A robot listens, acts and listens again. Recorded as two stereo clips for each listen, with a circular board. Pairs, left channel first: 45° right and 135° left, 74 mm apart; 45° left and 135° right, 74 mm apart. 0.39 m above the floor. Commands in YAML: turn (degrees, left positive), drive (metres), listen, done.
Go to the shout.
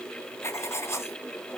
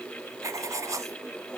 listen: true
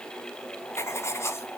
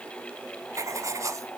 listen: true
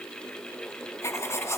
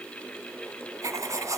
done: "I can't make out a shout, only writing."